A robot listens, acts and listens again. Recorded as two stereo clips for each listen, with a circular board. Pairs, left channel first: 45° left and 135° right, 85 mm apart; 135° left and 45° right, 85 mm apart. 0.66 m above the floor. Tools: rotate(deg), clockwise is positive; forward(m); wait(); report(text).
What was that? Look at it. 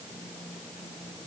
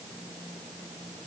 wait()
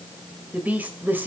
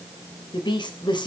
rotate(-160)
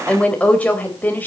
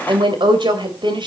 rotate(25)
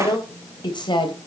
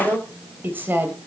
rotate(-20)
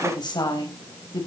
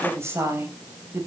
rotate(-15)
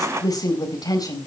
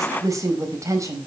report("Facing the woman speaking, 2 to 4 m away.")